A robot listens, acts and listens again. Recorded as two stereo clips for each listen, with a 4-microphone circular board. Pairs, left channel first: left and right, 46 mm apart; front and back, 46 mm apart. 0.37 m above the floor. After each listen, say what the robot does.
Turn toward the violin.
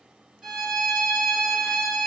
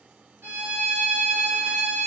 Turn 165° right.
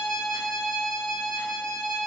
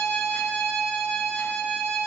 Turn 10° left.
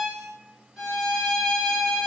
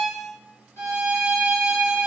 Facing the violin.